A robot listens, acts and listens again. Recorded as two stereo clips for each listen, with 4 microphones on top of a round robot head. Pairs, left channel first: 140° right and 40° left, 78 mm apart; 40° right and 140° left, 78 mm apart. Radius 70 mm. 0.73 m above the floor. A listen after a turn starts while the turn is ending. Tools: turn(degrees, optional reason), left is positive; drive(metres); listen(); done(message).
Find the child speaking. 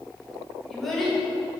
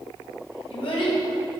turn(degrees=-50, reason="The child speaking: 50° right.")
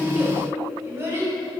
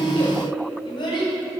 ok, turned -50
turn(degrees=-15, reason="The child speaking is now 15° right.")
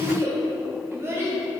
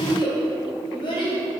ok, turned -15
turn(degrees=-15, reason="The child speaking is now 15° right.")
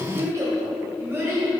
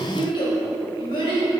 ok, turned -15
turn(degrees=-20, reason="The child speaking is now 20° right.")
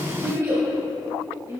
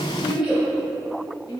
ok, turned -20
turn(degrees=-10, reason="The child speaking is now 10° right.")
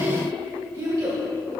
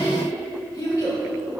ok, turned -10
done("Found it: a child speaking, straight ahead, 2 to 4 m away.")